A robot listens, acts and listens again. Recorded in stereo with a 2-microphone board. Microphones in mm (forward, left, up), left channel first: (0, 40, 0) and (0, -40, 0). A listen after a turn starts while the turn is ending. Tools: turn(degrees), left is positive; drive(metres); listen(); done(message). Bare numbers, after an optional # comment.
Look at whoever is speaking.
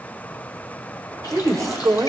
# The woman speaking: about 45° right or 135° right.
turn(-45)
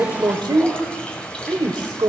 # So it is at 90° right.
turn(-90)
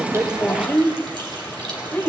# The woman speaking is now 20° left.
turn(20)
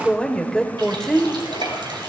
# The woman speaking is now 10° left.
turn(10)
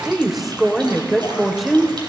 done("Facing the woman speaking, 1 to 2 m away.")